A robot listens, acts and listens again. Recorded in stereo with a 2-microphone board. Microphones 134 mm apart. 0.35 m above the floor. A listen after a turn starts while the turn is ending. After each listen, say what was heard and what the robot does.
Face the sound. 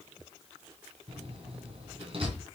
The door slam: about 50° right or 130° right. Turn 50° right.
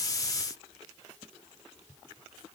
Keep listening.
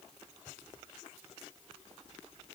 I heard a door slam, but can't make it out now. It was about straight ahead or 80° right.